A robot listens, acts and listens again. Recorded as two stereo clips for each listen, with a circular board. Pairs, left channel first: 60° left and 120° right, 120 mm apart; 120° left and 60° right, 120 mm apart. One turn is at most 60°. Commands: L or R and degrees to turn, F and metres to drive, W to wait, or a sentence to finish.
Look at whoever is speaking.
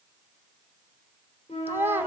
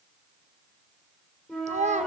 R50
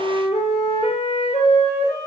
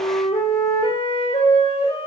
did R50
W
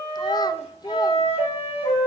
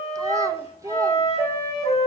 Found it: a child speaking, straight ahead, under 1 m away.